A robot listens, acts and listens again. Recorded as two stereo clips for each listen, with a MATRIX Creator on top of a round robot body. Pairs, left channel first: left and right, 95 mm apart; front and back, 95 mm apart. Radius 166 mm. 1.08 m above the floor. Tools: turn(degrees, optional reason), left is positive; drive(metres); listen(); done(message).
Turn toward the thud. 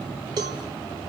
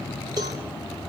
listen()
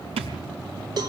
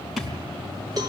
turn(degrees=-90, reason="The thud: 90° right.")
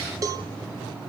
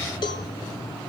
done("I heard a thud from this way, but can't make it out now.")